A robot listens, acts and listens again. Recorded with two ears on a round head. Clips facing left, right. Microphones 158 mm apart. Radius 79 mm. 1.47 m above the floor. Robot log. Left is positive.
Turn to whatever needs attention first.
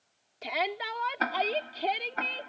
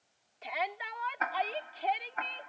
note: The shout: about 50° left or 130° left.
cmd yaw +50
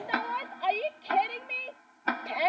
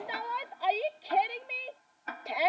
end: Facing the shout.